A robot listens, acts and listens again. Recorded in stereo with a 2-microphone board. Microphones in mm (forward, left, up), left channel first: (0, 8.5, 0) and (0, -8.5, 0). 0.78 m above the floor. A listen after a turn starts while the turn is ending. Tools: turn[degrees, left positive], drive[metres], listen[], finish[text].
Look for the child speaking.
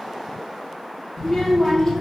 Action: turn[30]
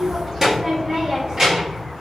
Thought: So it is at 45° right.
Action: turn[-45]
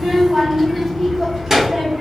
Thought: The child speaking is now 25° right.
Action: turn[-25]
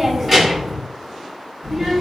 Thought: The child speaking is now 15° right.
Action: turn[-15]
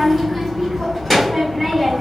Action: finish[Found it: a child speaking, straight ahead.]